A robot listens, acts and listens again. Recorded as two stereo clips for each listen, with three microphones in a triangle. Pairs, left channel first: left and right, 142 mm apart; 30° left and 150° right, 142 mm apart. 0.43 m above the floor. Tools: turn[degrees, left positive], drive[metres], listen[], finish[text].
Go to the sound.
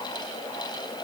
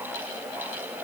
Action: listen[]
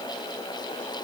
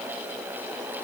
Action: listen[]
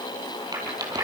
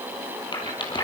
Thought: The rattle: 25° right.
Action: turn[-25]
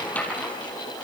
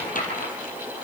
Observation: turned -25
Thought: The rattle is now 10° left.
Action: turn[10]
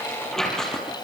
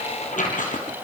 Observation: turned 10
Action: drive[1.0]
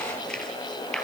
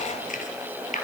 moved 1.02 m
Action: drive[1.0]
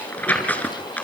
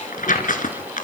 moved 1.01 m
Thought: The rattle is now 10° left.
Action: turn[10]
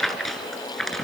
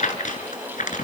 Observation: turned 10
Action: drive[1.0]
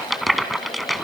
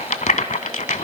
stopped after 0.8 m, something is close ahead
Action: finish[Arrived at the rattle, straight ahead.]